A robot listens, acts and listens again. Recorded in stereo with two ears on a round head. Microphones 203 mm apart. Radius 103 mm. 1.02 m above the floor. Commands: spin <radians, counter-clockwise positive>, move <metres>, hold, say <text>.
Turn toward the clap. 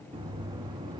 hold
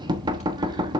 hold
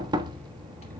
say I can't make out a clap, only knocking.